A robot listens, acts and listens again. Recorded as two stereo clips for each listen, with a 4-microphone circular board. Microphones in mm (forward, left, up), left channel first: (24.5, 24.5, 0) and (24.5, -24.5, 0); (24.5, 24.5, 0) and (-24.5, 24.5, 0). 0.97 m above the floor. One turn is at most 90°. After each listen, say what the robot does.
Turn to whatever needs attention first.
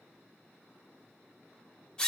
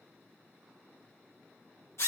Keep listening.
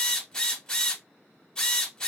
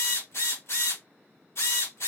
Keep listening.
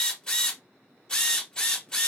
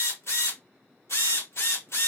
I can't make out anything urgent to turn to.